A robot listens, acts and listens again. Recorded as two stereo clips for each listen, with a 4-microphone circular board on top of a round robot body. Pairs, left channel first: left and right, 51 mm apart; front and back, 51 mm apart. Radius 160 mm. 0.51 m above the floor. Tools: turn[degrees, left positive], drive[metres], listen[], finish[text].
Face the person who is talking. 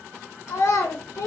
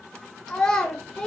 Thought: The child speaking: 75° left.
Action: turn[75]
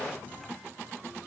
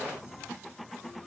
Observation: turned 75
Action: listen[]
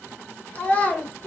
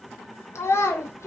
Thought: The child speaking is now 25° left.
Action: turn[25]
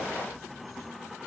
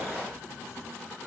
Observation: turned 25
Action: listen[]
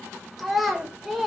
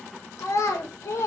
Action: finish[Found it: a child speaking, straight ahead.]